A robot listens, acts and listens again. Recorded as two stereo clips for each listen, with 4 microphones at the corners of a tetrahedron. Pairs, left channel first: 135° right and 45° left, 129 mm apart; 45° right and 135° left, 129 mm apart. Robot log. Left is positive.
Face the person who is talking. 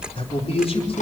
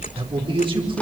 note: The man speaking: 175° right.
cmd yaw -175
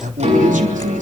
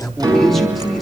note: The man speaking is now 45° left.
cmd yaw +45
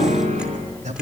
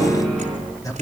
note: The man speaking is now 20° left.
cmd yaw +20
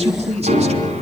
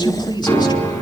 note: The man speaking is now 10° left.
cmd yaw +10
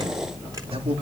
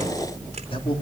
end: Found it: a man speaking, straight ahead.